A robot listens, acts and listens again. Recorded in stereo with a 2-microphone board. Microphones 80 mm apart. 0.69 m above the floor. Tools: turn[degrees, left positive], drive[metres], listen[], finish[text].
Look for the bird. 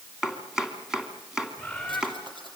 Action: turn[30]
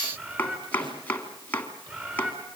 Thought: So it is at 25° right.
Action: turn[-25]
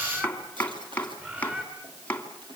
Thought: The bird is now 25° right.
Action: turn[-25]
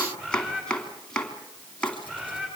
Thought: The bird is now 15° right.
Action: turn[-15]
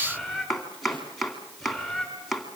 Action: finish[Found it: a bird, straight ahead, over 4 m away.]